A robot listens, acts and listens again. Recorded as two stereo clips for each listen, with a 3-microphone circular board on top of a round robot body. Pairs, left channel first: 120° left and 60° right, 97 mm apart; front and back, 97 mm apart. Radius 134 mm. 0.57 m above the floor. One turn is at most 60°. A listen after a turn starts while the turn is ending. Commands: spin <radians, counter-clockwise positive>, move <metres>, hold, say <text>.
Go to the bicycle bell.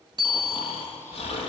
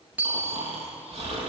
spin -1.05
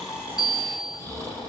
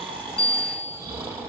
spin -0.35
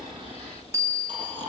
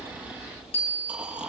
move 1.0
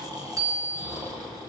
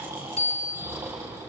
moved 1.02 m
move 1.0
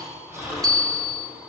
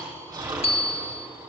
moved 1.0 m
spin -0.17
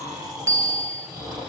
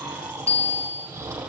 move 1.0
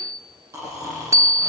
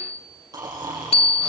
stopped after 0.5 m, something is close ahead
say Arrived at the bicycle bell, straight ahead.